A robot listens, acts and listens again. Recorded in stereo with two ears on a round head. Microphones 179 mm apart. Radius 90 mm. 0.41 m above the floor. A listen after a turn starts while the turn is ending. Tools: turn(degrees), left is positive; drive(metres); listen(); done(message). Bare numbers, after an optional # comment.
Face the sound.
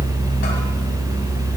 listen()
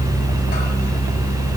listen()
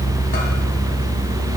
done("I can't make out anything.")